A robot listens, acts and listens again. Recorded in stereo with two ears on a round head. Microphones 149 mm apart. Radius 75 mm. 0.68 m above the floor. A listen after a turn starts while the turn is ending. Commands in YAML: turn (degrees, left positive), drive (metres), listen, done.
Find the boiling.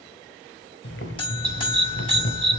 turn: 90
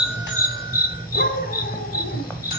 turn: 10
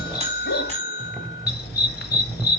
done: "Facing the boiling, 1 to 2 m away."